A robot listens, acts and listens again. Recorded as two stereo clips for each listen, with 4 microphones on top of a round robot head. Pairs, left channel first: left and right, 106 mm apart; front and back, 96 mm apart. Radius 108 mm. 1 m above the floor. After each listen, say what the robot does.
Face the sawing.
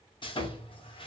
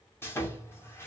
Turn 65° left.
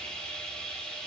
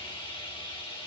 Turn 10° left.
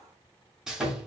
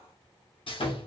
Found it: sawing, straight ahead.